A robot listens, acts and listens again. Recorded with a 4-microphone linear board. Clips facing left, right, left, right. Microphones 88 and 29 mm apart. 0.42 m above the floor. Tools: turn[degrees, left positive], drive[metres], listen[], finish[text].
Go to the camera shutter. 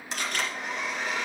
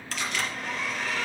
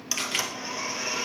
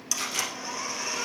Thought: The camera shutter: about 50° left or 130° left.
Action: turn[50]
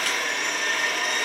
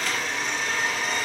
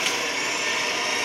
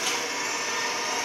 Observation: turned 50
Action: listen[]
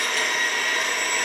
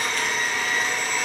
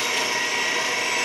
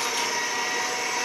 Action: listen[]
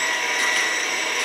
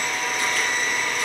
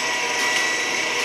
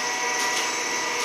Action: finish[I heard a camera shutter, but can't make it out now. It was about straight ahead or 80° left. I did not reach it.]